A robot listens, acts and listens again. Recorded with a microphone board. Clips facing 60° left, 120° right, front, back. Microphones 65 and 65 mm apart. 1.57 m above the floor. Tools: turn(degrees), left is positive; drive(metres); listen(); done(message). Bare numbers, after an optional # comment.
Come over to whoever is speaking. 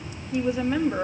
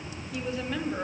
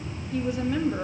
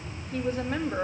# The woman speaking: 130° left.
turn(130)
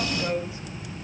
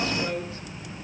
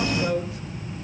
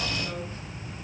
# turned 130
# The woman speaking is now 10° right.
turn(-10)
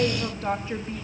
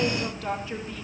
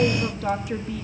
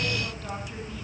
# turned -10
drive(1.0)
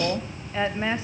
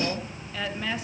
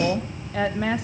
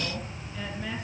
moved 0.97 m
drive(1.0)
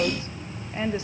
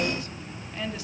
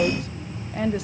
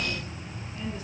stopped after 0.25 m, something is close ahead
done("I am next to the woman speaking.")